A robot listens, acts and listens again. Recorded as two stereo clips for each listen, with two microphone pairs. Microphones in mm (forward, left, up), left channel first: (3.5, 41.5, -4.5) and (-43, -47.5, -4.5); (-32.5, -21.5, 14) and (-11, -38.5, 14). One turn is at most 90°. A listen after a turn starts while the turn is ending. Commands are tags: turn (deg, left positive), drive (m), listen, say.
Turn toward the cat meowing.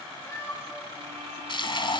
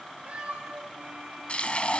<say>Facing the cat meowing, over 4 m away.</say>